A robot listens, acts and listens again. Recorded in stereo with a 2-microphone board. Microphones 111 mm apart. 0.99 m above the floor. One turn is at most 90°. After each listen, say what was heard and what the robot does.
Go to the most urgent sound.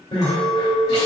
The crying: about 60° left or 120° left. Turn 60° left.
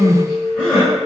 Drive 1.0 m forward.
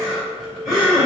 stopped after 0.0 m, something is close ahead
Blocked. The crying is further on, straight ahead.